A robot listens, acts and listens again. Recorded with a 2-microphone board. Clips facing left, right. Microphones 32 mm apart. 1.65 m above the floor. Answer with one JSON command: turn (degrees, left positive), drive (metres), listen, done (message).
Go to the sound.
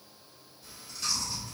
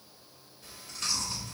{"turn": -65}
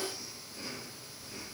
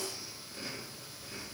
{"turn": -30}
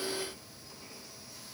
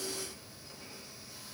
{"turn": -20}
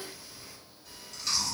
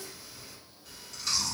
{"drive": 1.0}
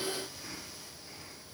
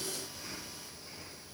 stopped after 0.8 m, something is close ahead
{"done": "Arrived at the chewing, straight ahead."}